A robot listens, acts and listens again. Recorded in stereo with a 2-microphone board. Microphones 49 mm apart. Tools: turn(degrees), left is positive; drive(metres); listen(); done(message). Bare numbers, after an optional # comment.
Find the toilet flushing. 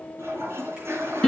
# The toilet flushing: about 70° right or 110° right.
turn(-70)
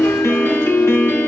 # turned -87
listen()
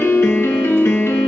listen()
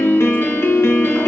done("I heard a toilet flushing, but can't make it out now. It was about 20° left or 25° right.")